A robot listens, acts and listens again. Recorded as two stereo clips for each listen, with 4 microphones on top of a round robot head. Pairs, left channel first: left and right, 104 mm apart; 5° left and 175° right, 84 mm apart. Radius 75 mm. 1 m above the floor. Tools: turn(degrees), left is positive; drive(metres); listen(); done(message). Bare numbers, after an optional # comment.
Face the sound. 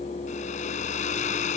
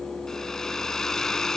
# The hair dryer: 90° left.
turn(90)
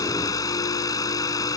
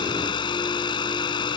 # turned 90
# The hair dryer is now 35° left.
turn(35)
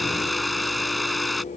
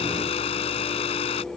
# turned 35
done("Found it: a hair dryer, straight ahead.")